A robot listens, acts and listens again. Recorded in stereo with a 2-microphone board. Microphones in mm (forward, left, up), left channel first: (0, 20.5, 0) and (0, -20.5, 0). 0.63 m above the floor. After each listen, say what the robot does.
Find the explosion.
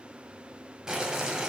Keep listening.
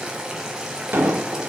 Turn 55° right.
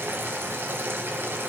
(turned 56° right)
Keep listening.
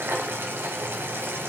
I heard an explosion, but can't make it out now. It was about straight ahead or 65° right.